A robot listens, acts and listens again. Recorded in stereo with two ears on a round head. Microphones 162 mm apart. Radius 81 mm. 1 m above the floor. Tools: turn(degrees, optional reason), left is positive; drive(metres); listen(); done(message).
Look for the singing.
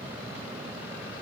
listen()
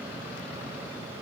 listen()
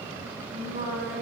turn(degrees=-45, reason="The singing: about 45° right or 135° right.")
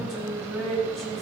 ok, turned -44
done("Found it: singing, straight ahead, over 4 m away.")